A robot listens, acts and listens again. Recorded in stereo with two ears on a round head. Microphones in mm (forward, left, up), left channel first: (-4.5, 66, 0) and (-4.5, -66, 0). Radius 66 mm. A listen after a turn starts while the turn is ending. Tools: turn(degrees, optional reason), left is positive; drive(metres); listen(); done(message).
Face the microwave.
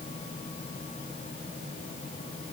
listen()
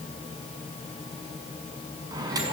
turn(degrees=-25, reason="The microwave: about 25° right or 155° right.")
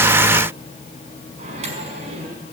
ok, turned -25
turn(degrees=-130, reason="So it is at 130° right.")
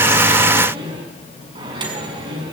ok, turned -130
turn(degrees=-30, reason="The microwave is now 30° right.")
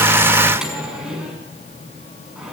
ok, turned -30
done("Found it: a microwave, straight ahead.")